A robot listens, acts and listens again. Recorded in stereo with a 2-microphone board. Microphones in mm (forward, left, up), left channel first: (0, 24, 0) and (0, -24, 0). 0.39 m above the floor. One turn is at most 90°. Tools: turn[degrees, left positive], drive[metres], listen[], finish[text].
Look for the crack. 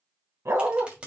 Thought: The crack: about 25° right or 155° right.
Action: turn[-25]
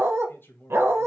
Action: listen[]
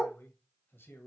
Action: finish[I heard a crack, but can't make it out now. It was about straight ahead or 130° right.]